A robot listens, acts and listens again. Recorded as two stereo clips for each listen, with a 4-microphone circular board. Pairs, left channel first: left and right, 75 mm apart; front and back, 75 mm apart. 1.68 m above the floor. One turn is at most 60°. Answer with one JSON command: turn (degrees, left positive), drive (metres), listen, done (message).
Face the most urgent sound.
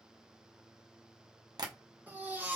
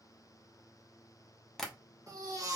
{"turn": -60}
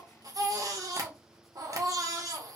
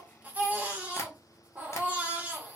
{"turn": -60}
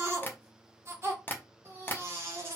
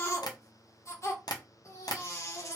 {"turn": -40}
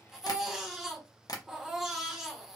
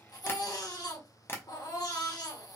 {"turn": -10}
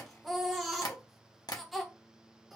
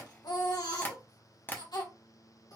{"done": "Facing the baby crying, 1 to 2 m away."}